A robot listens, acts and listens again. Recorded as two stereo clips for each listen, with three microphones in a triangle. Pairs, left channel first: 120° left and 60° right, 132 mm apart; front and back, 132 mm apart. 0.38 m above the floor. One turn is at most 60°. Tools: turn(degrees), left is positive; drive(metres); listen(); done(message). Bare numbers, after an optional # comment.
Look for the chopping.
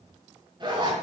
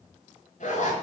listen()
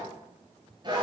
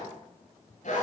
listen()
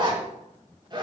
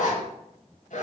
done("I can't make out chopping to turn to.")